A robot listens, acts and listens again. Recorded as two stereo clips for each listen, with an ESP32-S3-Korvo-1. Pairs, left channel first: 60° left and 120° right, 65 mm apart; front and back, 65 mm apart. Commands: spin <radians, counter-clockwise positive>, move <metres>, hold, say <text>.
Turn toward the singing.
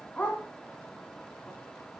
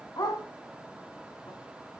hold
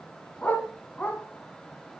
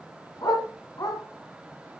hold
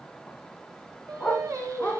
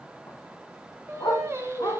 spin -2.44
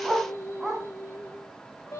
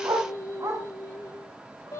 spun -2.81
spin 0.35
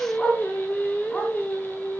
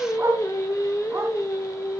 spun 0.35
say Facing the singing.